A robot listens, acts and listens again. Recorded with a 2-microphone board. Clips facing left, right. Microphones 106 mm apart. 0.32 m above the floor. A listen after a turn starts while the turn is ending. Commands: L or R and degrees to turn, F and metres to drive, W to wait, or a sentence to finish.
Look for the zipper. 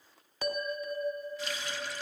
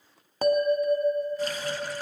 W
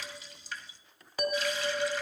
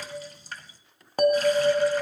W
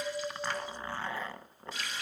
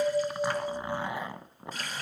R30
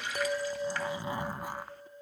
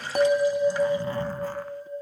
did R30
L15
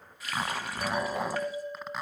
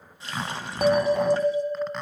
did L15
Facing the zipper.